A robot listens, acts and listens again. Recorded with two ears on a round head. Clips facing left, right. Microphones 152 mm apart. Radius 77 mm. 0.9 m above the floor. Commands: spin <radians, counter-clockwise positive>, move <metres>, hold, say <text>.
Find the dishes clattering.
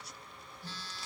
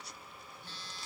hold
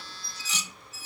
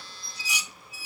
spin -0.52
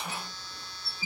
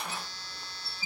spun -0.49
spin -2.44
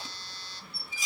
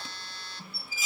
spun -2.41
say Found it: dishes clattering, straight ahead.